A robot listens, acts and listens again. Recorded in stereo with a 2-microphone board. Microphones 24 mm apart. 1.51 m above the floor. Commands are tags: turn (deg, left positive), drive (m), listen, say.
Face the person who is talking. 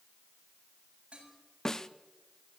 <listen/>
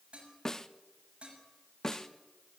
<listen/>
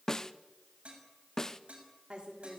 <turn deg="-50"/>
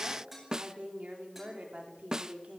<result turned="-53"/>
<turn deg="-80"/>
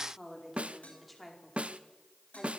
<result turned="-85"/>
<say>Facing the woman speaking.</say>